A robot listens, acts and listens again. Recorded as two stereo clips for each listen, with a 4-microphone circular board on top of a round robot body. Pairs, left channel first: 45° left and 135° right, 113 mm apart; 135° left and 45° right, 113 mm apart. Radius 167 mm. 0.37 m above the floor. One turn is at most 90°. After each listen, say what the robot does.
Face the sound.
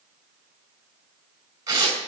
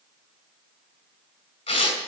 Turn 90° left.
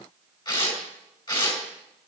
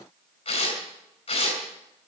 Turn 90° left.
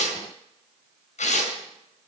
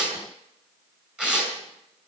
Turn 40° left.
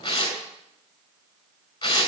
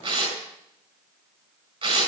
Turn 10° right.
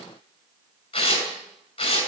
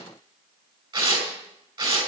Facing the tearing paper, over 4 m away.